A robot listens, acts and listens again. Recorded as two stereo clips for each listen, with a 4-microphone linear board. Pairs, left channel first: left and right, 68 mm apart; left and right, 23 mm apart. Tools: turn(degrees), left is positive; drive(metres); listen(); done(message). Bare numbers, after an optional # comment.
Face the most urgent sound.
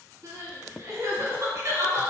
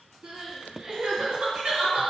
# The crying: about 50° right or 130° right.
turn(-50)
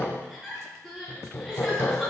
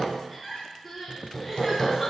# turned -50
done("Facing the crying, 2 to 4 m away.")